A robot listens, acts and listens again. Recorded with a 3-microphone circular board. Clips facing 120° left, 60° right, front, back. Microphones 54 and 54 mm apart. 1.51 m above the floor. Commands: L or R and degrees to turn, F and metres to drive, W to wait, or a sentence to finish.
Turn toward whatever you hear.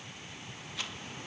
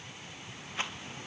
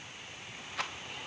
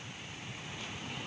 Facing the rattle.